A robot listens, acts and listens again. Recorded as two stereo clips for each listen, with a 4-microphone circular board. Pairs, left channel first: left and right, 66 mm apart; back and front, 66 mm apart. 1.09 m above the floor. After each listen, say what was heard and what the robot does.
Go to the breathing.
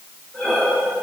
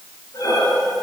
The breathing: 165° left. Turn 165° left.
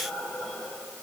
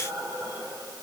The breathing is now 15° left. Turn 15° left.
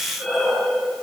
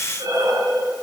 Drive 1.0 m forward.
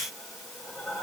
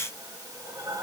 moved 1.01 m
Drive 1.0 m forward.
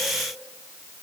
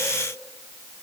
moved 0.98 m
Keep listening.
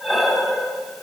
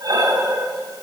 Drive 1.0 m forward.
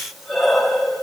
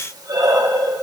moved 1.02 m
Drive 1.0 m forward.
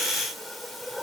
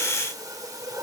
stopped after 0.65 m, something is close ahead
Keep listening.
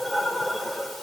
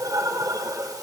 I am next to the breathing.